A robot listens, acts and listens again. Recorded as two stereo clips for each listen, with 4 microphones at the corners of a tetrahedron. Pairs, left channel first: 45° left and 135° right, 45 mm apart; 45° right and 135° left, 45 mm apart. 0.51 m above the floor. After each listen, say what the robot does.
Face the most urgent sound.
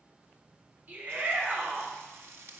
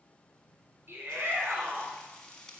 Turn 175° left.
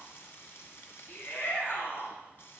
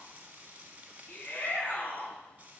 Facing the shout.